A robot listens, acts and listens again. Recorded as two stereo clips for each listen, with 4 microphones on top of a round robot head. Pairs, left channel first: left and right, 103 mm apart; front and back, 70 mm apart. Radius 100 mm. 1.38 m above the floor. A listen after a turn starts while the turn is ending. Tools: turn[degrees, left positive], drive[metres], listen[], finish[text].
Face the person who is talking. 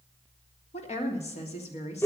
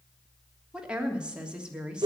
Thought: The woman speaking: 105° left.
Action: turn[105]
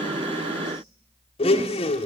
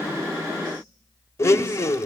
Action: listen[]
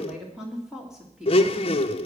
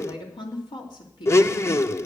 Action: finish[Facing the woman speaking.]